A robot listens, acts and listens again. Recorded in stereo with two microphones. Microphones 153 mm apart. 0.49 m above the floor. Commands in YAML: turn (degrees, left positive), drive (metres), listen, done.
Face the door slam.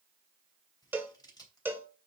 listen: true
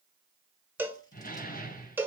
turn: 70
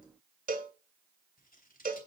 listen: true
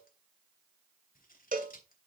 done: "I heard a door slam, but can't make it out now. It was about straight ahead or 40° left."